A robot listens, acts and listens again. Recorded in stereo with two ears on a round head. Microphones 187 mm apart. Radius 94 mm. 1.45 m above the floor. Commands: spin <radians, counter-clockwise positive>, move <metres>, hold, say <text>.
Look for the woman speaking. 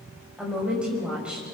spin -0.52
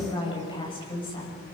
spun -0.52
spin 0.44
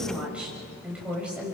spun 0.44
say Facing the woman speaking.